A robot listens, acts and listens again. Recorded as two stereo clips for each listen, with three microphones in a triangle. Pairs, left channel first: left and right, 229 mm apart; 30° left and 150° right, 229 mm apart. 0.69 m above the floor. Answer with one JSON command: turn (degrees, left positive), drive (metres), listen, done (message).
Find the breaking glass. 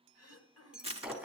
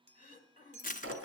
{"turn": -175}
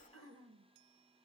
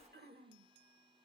{"done": "I heard breaking glass from this way, but can't make it out now."}